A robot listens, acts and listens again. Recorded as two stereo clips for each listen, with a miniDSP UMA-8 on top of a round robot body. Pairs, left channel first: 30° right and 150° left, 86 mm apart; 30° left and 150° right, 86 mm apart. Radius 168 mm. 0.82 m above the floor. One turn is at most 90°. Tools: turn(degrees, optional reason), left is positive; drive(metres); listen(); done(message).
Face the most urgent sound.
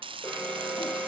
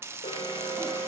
turn(degrees=45, reason="The alarm: 45° left.")
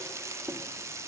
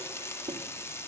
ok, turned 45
listen()
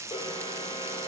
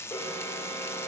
turn(degrees=-15, reason="The alarm is now 15° right.")
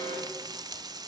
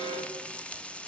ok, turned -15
done("Facing the alarm.")